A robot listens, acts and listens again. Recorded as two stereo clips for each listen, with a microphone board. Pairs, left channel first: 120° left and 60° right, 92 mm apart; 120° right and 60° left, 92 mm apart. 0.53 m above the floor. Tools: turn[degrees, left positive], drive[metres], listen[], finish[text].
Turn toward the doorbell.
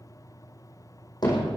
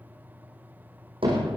Action: listen[]
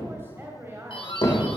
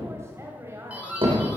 Thought: The doorbell: 135° left.
Action: turn[135]
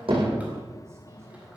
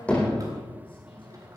Action: listen[]
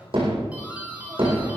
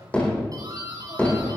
Thought: The doorbell is now 15° left.
Action: turn[15]
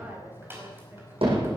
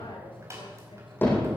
Action: finish[Facing the doorbell.]